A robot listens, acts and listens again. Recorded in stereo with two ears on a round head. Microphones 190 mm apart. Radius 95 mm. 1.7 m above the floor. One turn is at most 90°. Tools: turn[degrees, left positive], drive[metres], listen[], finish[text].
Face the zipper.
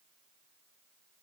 Action: listen[]
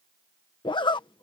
Thought: The zipper: about 25° left or 155° left.
Action: turn[25]
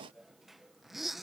Action: finish[Found it: a zipper, straight ahead.]